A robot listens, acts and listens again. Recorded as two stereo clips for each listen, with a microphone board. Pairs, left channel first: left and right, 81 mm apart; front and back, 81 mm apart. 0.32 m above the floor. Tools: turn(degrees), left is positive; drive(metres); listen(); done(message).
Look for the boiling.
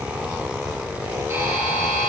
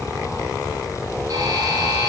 listen()
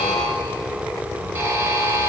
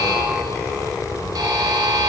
listen()
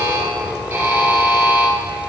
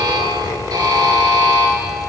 done("I can't make out boiling, only a buzzer.")